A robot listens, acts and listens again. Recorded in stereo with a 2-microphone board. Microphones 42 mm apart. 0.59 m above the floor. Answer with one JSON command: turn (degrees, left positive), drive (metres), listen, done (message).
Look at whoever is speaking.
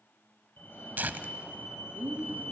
{"turn": -50}
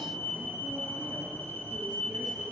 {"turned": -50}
{"listen": true}
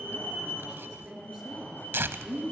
{"done": "Facing the woman speaking, over 4 m away."}